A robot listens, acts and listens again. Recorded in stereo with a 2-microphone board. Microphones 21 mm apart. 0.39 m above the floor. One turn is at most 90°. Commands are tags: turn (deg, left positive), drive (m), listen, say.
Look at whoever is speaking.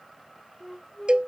<listen/>
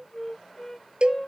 <listen/>
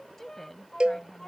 <turn deg="30"/>
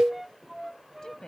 <turn deg="90"/>
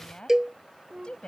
<turn deg="70"/>
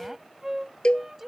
<turn deg="-15"/>
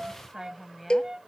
<say>Facing the woman speaking.</say>